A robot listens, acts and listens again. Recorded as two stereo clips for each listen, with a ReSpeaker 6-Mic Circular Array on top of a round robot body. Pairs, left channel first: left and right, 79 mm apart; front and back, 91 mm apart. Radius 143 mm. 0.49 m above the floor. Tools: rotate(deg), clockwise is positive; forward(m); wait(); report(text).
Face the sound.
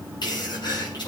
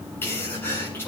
rotate(-65)
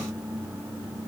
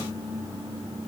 report("I heard a sneeze from this way, but can't make it out now.")